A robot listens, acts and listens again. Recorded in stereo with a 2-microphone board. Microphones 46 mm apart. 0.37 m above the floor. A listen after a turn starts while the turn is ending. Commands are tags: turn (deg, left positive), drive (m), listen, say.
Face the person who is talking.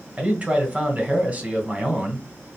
<turn deg="-30"/>
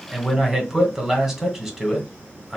<say>Found it: a man speaking, straight ahead, 1 to 2 m away.</say>